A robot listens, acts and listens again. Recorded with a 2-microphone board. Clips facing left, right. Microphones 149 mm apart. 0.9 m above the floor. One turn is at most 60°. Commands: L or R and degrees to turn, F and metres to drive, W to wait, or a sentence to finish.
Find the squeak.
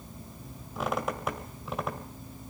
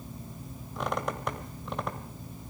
L30
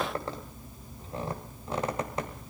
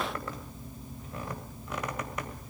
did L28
L60
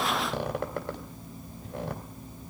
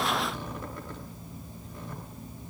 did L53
L60
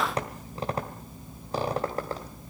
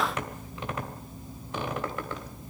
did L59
L35
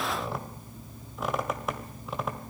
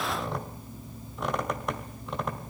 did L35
Found it: a squeak, straight ahead.